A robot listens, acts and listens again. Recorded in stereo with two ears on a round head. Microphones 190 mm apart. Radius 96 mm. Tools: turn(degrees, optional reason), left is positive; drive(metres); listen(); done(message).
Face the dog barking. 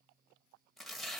listen()
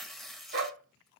turn(degrees=-55, reason="The dog barking: about 55° right or 125° right.")
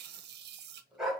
done("Found it: a dog barking, straight ahead.")